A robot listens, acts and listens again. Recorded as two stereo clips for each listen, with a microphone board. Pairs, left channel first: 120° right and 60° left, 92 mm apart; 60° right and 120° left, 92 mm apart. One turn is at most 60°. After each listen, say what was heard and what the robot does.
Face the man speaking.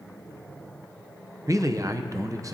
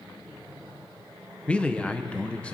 The man speaking: 15° left. Turn 15° left.
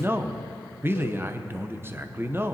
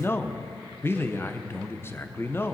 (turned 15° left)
Facing the man speaking.